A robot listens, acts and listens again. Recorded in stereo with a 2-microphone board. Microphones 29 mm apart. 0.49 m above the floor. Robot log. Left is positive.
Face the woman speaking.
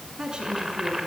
note: The woman speaking: about 25° right or 155° right.
cmd yaw -25
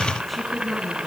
end: Facing the woman speaking.